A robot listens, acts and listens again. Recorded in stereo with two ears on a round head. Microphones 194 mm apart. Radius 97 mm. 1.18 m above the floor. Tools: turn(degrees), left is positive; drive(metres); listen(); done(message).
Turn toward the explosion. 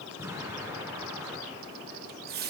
turn(degrees=-30)
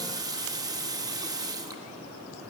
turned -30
listen()
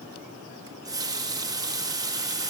done("I heard an explosion, but can't make it out now. It was about 15° left or 135° right.")